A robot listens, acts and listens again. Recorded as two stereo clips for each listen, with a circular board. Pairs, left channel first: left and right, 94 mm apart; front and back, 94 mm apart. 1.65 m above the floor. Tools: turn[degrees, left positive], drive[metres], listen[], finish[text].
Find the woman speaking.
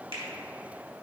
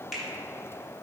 Action: listen[]
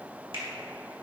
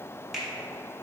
Action: listen[]
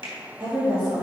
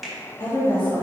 Thought: The woman speaking: 50° right.
Action: turn[-50]
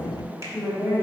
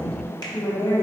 Action: finish[Found it: a woman speaking, straight ahead, 2 to 4 m away.]